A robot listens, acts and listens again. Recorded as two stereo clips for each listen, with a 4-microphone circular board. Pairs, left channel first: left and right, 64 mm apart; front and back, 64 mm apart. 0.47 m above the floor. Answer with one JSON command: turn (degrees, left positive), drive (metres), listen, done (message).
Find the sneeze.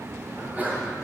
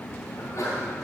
{"turn": -25}
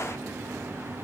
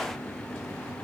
{"done": "Facing where the sneeze came from. I can't hear it now."}